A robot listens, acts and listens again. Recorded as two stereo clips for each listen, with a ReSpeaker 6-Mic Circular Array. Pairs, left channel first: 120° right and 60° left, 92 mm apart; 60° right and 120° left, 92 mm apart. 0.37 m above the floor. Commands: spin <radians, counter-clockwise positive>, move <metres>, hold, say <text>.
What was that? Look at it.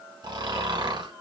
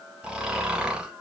spin 0.79
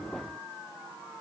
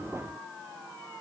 hold
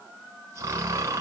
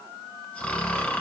spin 0.26
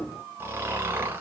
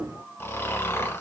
say Facing the snoring.